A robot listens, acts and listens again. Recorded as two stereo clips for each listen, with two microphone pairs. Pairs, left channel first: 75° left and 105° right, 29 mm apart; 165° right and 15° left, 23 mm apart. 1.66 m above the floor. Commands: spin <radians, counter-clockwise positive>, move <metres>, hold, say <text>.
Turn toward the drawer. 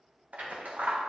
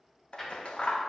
spin -1.57
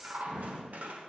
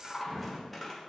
spin -0.79
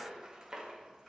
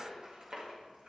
hold
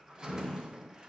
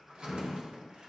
say Facing the drawer.